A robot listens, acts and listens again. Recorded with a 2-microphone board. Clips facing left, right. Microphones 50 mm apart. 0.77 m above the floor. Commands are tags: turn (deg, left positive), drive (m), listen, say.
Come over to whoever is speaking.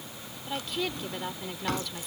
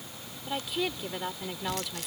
<turn deg="-30"/>
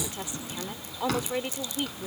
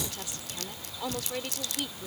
<turn deg="20"/>
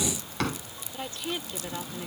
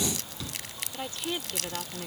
<drive m="1.0"/>
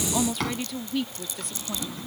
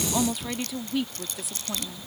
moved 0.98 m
<drive m="1.0"/>
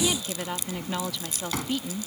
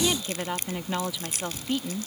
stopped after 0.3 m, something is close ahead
<turn deg="-10"/>
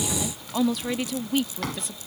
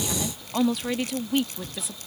<say>I am next to the woman speaking.</say>